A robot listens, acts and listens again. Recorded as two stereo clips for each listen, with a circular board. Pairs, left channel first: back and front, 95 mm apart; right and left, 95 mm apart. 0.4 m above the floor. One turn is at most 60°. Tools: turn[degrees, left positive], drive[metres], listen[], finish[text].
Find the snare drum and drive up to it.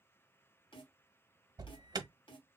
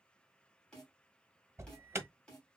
Thought: The snare drum: 165° right.
Action: turn[-60]
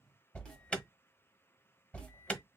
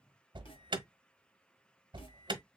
Thought: Nothing new. It was at 105° right.
Action: turn[-60]
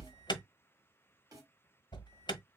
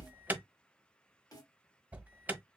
Thought: The snare drum is now 40° right.
Action: turn[-40]
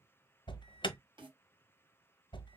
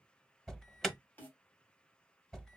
Thought: The snare drum is now 20° right.
Action: turn[-20]
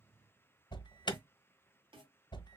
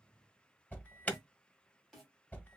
Action: drive[1.0]
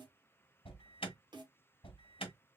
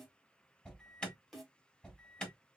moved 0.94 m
Action: drive[1.0]
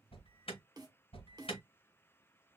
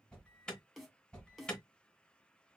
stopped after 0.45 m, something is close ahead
Action: finish[I am next to the snare drum.]